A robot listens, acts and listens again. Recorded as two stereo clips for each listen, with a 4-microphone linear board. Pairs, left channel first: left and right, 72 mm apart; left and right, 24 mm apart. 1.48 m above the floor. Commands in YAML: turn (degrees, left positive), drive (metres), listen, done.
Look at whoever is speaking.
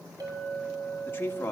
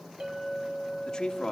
turn: 30
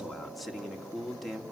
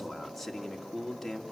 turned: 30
done: "Facing the man speaking."